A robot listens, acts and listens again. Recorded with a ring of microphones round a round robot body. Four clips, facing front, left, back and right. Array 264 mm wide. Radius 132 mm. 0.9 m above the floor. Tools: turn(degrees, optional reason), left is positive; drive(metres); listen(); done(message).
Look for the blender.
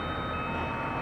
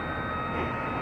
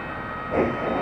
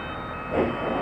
turn(degrees=-145, reason="The blender: 145° right.")
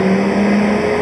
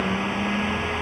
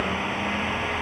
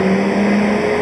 turn(degrees=-45, reason="The blender is now 45° right.")
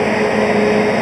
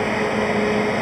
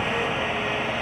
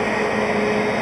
done("Found it: a blender, straight ahead.")